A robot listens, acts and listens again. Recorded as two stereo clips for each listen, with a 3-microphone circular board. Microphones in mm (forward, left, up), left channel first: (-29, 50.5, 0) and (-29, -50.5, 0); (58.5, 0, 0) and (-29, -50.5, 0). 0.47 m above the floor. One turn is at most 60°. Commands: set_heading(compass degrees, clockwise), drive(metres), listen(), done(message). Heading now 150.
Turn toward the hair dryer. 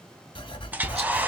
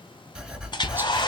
set_heading(165)
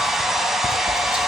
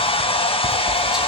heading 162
done("Found it: a hair dryer, straight ahead.")